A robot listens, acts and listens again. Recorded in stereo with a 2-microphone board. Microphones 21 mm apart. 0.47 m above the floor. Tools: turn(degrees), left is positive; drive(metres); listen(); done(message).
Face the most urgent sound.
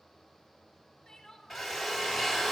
turn(degrees=30)
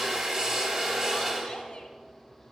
listen()
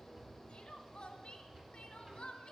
turn(degrees=135)
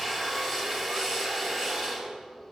listen()
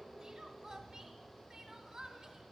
turn(degrees=-20)
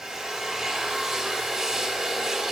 listen()
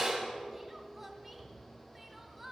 done("Facing the crying, 1 to 2 m away.")